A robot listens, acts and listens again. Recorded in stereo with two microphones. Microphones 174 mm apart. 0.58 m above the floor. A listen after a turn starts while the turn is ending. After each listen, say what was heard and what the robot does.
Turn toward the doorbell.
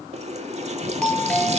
Turn 30° left.
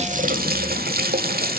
Keep listening.
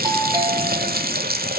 Keep listening.
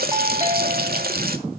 So it is at 25° right. Turn 25° right.
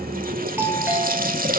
The doorbell is now 15° right. Turn 15° right.
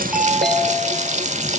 Found it: a doorbell, straight ahead.